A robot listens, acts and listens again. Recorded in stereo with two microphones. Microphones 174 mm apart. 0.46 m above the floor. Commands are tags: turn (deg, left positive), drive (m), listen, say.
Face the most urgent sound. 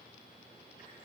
<listen/>
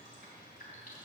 <listen/>
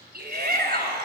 <turn deg="-65"/>
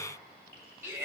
<turn deg="-15"/>
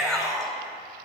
<say>Facing the shout.</say>